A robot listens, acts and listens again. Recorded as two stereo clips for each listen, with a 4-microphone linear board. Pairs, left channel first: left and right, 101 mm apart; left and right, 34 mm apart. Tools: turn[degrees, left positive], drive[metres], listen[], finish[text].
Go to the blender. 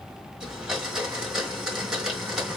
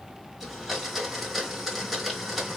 Action: turn[-30]
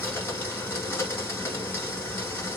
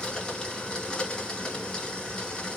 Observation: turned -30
Thought: So it is at 25° left.
Action: turn[25]
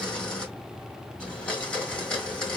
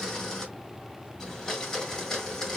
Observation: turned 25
Thought: The blender is now 10° left.
Action: turn[10]
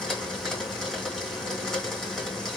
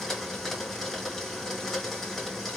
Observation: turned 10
Action: drive[1.0]
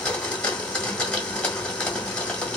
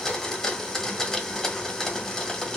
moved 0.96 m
Thought: The blender is now 10° left.
Action: turn[10]
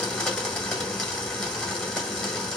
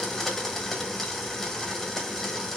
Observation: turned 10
Action: drive[1.0]
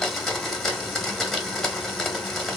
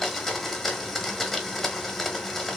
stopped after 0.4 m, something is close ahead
Action: finish[Arrived at the blender, straight ahead.]